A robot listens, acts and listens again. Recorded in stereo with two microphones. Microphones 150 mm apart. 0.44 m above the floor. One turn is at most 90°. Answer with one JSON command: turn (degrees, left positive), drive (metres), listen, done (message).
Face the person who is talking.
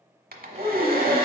{"turn": -50}
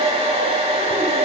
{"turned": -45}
{"listen": true}
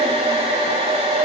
{"listen": true}
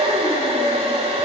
{"done": "I heard a child speaking, but can't make it out now. It was about 5° right or 85° right."}